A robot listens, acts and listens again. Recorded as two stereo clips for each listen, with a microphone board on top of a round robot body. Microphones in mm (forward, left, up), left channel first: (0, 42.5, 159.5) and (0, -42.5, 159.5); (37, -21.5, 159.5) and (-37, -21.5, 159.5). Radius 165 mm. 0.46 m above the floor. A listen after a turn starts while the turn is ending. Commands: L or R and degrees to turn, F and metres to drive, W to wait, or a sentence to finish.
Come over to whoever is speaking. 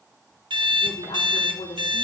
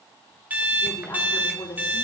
L60
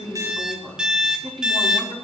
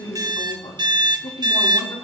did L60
F1.0
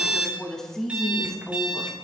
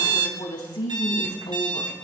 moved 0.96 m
F1.0
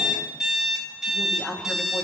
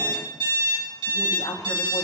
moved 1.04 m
F1.0
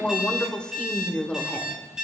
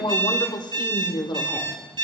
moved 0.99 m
L10
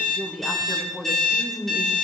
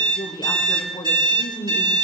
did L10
F1.0
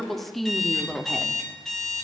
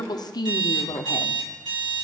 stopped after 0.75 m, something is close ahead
I am next to the woman speaking.